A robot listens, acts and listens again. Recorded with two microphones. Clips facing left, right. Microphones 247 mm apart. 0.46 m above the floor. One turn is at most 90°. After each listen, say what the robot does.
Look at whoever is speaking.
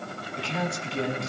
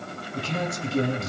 Turn 50° right.
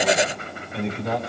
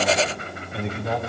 Found it: a man speaking, straight ahead.